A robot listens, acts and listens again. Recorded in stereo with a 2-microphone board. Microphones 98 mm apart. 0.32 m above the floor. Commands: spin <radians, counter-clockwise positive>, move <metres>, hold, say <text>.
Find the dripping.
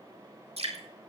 spin -1.22
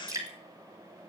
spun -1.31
spin -0.61
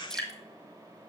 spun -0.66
say Facing the dripping, 2 to 4 m away.